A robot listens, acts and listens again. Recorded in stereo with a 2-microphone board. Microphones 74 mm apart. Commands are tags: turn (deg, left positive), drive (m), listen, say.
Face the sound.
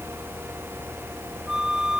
<turn deg="-30"/>
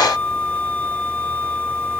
<turn deg="25"/>
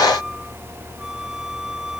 <listen/>
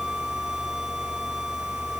<listen/>
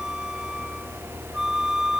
<say>Facing the flute.</say>